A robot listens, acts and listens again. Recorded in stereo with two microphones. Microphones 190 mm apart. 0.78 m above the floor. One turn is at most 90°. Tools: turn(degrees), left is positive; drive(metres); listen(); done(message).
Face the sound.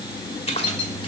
turn(degrees=30)
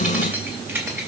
turn(degrees=-15)
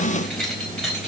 done("Facing the keys jangling, 2 to 4 m away.")